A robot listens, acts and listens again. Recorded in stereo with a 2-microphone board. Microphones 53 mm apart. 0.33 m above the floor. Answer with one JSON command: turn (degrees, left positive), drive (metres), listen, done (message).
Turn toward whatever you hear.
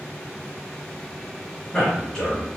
{"turn": 30}
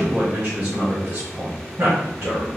{"turn": -50}
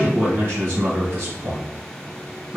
{"turn": -45}
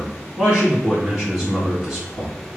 {"done": "Found it: a man speaking, straight ahead, 2 to 4 m away."}